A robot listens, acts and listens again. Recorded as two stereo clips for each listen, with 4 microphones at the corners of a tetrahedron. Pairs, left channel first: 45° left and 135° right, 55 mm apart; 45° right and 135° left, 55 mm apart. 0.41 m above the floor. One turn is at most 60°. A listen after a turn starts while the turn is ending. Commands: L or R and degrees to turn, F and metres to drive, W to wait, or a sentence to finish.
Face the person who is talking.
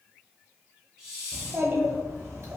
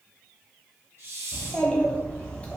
R60
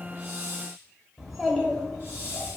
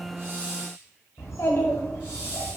R45
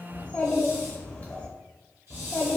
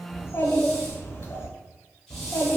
R20
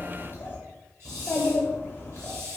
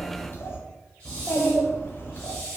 Found it: a child speaking, straight ahead.